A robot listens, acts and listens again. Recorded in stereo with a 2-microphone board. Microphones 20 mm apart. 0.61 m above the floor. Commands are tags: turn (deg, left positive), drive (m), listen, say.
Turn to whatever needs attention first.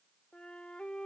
<listen/>
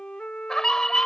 <turn deg="25"/>
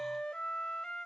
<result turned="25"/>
<listen/>
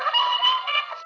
<say>Facing the scream.</say>